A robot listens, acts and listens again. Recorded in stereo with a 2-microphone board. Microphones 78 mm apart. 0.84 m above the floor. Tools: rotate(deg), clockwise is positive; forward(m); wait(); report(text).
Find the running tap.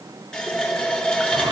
rotate(-30)
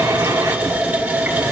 rotate(20)
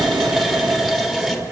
report("Facing the running tap.")